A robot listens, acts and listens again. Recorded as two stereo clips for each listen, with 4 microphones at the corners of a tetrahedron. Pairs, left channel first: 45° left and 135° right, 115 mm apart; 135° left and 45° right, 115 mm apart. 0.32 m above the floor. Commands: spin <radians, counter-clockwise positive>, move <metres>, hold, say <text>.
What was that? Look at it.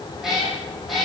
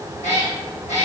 spin 2.36
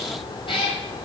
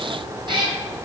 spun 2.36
say Facing the cat meowing, 1 to 2 m away.